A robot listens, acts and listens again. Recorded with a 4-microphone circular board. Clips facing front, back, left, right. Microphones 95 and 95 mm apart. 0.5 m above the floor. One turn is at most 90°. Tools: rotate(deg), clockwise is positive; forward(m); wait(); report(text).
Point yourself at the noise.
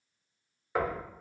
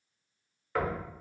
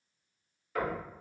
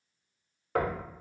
rotate(75)
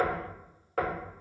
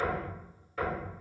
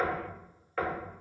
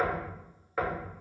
rotate(10)
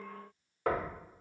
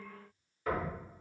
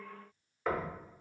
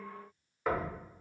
report("Found it: knocking, straight ahead.")